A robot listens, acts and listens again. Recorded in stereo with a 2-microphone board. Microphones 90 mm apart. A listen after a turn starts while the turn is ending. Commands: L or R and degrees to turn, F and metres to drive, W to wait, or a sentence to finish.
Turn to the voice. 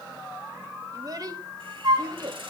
R50
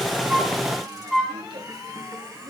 W
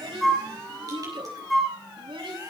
R75
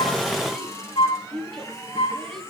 Found it: a child speaking, straight ahead, over 4 m away.